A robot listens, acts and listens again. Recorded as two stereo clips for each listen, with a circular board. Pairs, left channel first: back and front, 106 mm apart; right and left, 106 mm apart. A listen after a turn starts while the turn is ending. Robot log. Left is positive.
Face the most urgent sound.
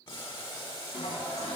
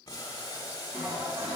cmd idle
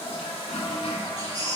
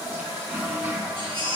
note: The baby crying: 55° left.
cmd yaw +55
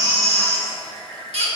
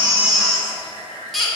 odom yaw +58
end: Facing the baby crying, 1 to 2 m away.